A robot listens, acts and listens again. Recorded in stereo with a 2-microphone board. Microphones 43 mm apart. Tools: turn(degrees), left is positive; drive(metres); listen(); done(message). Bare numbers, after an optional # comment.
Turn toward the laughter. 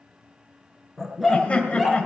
# The laughter: about 30° left or 150° left.
turn(30)
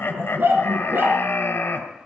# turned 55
# So it is at 95° left.
turn(95)
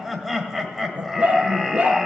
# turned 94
done("Found it: laughter, straight ahead.")